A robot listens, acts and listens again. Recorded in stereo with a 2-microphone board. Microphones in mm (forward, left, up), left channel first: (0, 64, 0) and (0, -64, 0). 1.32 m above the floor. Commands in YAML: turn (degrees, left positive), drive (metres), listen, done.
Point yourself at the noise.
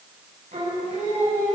turn: -65
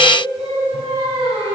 turn: -50
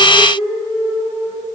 turn: -30
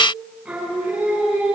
turn: -10
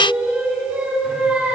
done: "Facing the singing, over 4 m away."